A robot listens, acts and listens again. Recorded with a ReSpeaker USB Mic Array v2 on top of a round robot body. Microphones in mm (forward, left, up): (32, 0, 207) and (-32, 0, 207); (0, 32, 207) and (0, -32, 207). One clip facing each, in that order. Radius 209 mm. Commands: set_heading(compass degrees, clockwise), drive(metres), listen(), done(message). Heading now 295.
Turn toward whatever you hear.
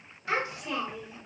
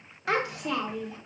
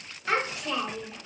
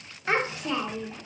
set_heading(80)
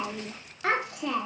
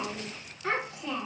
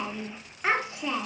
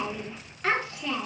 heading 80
set_heading(55)
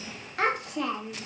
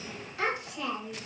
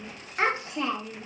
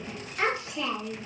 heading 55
set_heading(10)
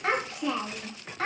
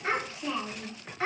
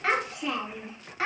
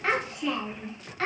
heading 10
set_heading(0)
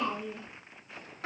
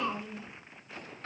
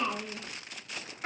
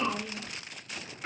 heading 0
set_heading(350)
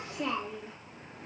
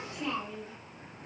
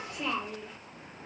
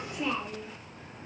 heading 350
done("Found it: a child speaking, straight ahead, 2 to 4 m away.")